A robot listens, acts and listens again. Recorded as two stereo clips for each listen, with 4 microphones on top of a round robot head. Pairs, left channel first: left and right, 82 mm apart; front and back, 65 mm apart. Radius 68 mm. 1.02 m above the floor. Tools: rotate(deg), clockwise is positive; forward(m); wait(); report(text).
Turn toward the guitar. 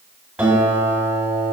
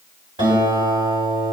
rotate(155)
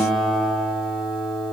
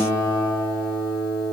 report("Facing the guitar, 2 to 4 m away.")